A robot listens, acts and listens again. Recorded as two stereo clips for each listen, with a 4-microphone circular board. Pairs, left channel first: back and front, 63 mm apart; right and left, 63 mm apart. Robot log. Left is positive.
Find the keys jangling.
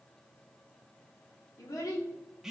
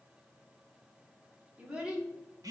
cmd idle
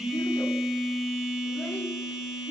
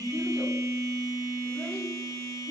cmd idle
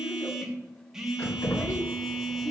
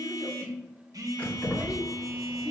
note: The keys jangling: 160° right.
cmd yaw -160
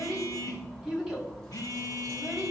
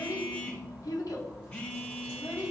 note: The keys jangling is now 40° right.
cmd yaw -40
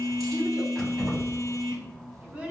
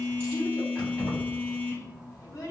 note: The keys jangling is now 30° right.
cmd yaw -30
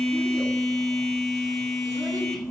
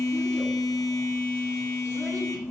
cmd idle
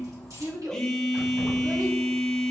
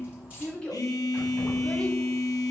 note: The keys jangling is now 20° left.
cmd yaw +20
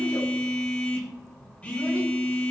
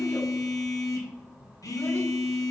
cmd idle
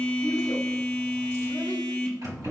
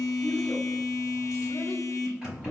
note: The keys jangling is now 10° left.
cmd yaw +10
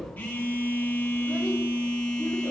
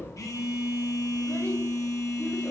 end: Facing the keys jangling, 2 to 4 m away.